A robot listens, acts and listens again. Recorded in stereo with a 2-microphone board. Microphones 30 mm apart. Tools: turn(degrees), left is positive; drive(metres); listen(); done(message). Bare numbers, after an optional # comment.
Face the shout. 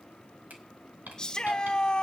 # The shout: about 25° left or 155° left.
turn(25)
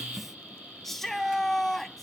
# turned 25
done("Found it: a shout, straight ahead.")